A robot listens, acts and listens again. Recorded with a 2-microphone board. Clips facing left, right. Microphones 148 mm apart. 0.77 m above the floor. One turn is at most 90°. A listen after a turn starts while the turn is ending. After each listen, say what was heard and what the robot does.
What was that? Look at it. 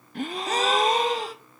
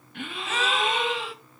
The gasp: about 40° left or 140° left. Turn 40° left.
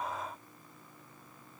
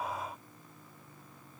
Keep listening.
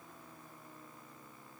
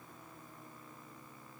I heard a gasp, but can't make it out now. It was about straight ahead or 100° left.